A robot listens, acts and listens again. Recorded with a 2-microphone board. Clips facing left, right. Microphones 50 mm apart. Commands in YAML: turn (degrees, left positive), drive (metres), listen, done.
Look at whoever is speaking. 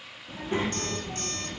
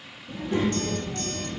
turn: 30
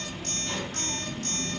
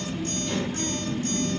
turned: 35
done: "Found it: a child speaking, straight ahead."